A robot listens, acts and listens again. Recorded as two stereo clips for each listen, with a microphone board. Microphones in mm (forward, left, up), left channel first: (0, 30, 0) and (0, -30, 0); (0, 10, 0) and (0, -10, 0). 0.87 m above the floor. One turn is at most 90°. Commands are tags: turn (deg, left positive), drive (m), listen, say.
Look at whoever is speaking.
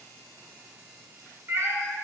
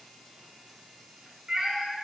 <listen/>
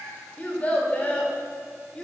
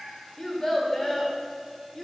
<turn deg="15"/>
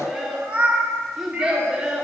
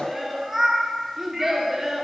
<turn deg="-15"/>
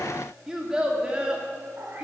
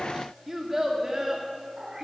<turn deg="-15"/>
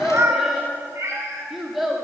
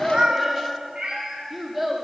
<say>Found it: a child speaking, straight ahead, 1 to 2 m away.</say>